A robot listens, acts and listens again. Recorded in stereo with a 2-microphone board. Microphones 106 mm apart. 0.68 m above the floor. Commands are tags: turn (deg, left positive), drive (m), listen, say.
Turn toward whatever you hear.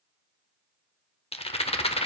<turn deg="70"/>
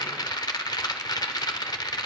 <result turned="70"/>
<turn deg="40"/>
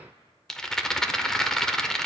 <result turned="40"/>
<say>Found it: a rattle, straight ahead, under 1 m away.</say>